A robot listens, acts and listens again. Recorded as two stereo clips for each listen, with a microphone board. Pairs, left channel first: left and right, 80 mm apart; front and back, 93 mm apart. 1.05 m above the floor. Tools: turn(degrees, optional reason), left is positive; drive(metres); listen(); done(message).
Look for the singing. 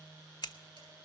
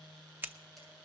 listen()
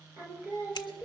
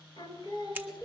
turn(degrees=-35, reason="The singing: 35° right.")
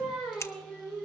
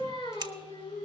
done("Facing the singing, 2 to 4 m away.")